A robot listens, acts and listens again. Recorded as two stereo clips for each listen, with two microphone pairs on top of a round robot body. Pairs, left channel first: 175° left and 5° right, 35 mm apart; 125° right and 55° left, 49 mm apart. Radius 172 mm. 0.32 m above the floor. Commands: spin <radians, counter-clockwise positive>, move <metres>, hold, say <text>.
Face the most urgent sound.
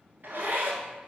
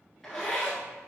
hold
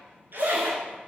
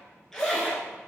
hold
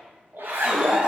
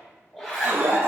spin 0.96
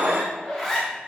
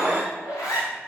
say Facing the alarm, 2 to 4 m away.